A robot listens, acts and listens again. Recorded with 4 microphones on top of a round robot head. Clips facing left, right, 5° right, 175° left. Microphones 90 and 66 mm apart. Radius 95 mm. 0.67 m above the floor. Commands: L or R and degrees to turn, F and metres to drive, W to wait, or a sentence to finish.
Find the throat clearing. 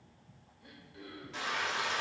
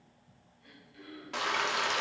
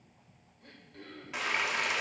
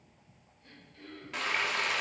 L25
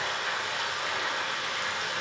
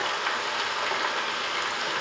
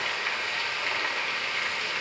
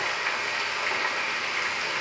W
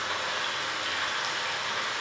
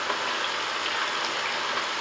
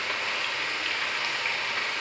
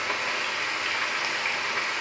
W
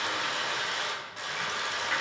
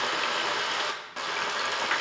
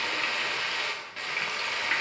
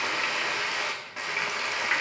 I heard throat clearing from this way, but can't make it out now.